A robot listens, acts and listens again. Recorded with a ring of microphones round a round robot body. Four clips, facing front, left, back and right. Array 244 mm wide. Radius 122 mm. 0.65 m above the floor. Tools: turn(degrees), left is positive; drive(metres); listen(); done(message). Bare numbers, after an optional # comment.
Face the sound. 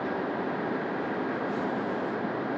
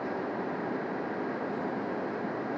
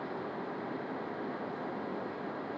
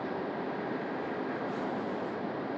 listen()
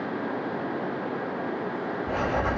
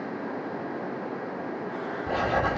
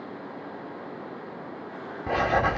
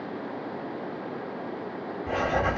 # The writing: 170° left.
turn(170)
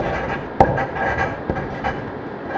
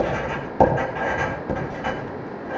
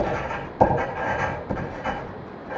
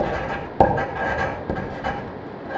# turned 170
# The writing is now 10° right.
turn(-10)
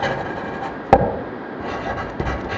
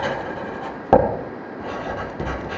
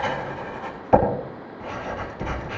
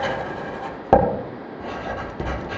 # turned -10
done("Found it: writing, straight ahead.")